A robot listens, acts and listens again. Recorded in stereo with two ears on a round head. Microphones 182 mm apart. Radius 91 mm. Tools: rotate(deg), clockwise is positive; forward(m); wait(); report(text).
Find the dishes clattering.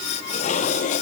rotate(-40)
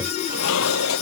rotate(-105)
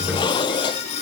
rotate(-20)
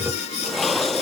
report("Found it: dishes clattering, straight ahead.")